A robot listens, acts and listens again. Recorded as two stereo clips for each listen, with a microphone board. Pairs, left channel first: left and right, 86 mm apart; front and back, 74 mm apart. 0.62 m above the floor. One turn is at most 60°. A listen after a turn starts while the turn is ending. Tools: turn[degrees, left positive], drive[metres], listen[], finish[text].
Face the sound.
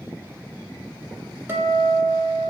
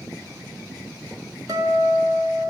Thought: The guitar: 155° right.
Action: turn[-60]
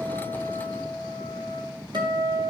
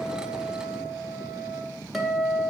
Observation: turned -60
Thought: The guitar is now 95° right.
Action: turn[-60]
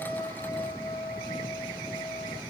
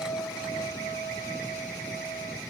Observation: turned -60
Thought: The guitar is now 45° right.
Action: turn[-45]
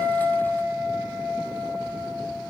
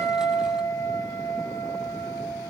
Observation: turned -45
Thought: The guitar is now 15° right.
Action: turn[-15]
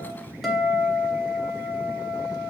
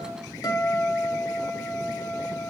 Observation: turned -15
Action: finish[Found it: a guitar, straight ahead.]